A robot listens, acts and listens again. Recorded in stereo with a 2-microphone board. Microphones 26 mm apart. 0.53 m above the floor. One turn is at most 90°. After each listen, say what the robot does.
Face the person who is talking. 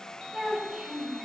Turn 30° right.
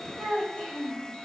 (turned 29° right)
Turn 35° left.
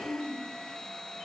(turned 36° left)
Turn 15° left.
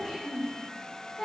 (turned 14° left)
Turn 15° left.
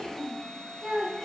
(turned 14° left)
Facing the child speaking, 2 to 4 m away.